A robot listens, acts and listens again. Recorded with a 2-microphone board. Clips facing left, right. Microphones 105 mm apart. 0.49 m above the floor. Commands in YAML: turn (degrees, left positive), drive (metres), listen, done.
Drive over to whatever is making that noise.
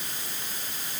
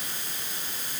listen: true
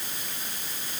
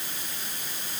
listen: true
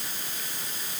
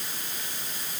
done: "I can't make out anything to turn to."